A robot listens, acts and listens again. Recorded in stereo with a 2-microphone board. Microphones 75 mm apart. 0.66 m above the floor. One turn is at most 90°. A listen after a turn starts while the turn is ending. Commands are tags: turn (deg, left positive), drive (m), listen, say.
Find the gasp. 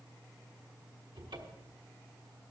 <listen/>
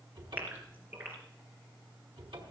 <turn deg="-25"/>
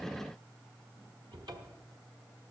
<listen/>
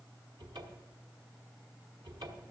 <say>I heard a gasp, but can't make it out now. It was about straight ahead or 130° right.</say>